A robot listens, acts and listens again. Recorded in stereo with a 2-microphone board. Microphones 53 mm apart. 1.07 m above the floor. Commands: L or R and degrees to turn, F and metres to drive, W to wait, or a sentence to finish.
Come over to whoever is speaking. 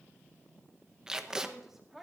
R30
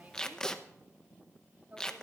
R145
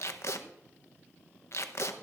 W
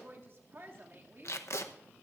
R50
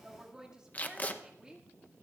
R15
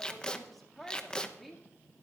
F1.0
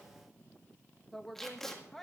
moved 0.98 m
F1.0
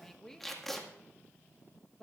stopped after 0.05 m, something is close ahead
I am next to the woman speaking.